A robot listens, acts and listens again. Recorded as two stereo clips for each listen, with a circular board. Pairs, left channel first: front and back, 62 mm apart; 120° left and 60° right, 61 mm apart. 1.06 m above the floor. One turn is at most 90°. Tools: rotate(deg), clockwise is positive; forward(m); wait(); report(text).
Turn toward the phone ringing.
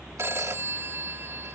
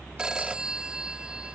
rotate(90)
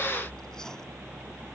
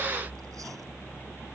rotate(50)
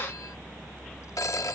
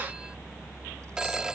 rotate(-15)
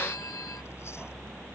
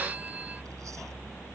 wait()
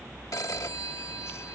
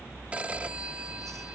report("Facing the phone ringing.")